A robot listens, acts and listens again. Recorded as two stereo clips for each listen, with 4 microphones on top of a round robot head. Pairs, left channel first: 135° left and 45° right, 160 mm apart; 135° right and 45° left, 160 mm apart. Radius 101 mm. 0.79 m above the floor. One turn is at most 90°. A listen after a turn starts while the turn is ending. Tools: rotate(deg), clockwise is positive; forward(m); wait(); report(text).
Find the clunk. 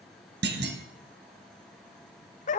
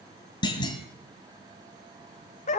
rotate(65)
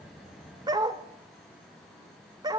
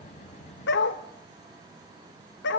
report("I heard a clunk from this way, but can't make it out now.")